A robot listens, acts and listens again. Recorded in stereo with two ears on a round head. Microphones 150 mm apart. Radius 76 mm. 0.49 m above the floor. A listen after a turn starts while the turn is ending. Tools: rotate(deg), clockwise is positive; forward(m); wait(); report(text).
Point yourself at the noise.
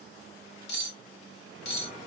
rotate(-75)
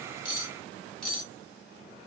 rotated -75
report("Found it: cutlery clinking, straight ahead.")